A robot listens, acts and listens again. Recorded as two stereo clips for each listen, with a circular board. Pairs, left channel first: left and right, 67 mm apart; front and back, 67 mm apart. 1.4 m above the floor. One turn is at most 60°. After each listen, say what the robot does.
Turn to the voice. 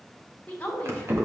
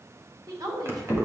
Turn 60° left.
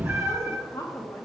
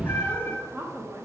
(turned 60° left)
Turn 60° left.
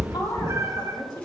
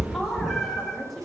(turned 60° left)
Turn 60° left.
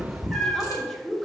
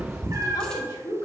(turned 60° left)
Facing the woman speaking, 1 to 2 m away.